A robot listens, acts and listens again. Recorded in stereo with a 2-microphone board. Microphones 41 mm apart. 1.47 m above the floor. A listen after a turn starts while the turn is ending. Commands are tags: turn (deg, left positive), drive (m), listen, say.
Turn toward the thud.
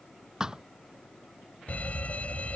<turn deg="-15"/>
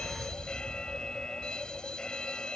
<listen/>
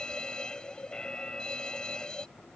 <say>I heard a thud, but can't make it out now. It was about straight ahead or 150° right.</say>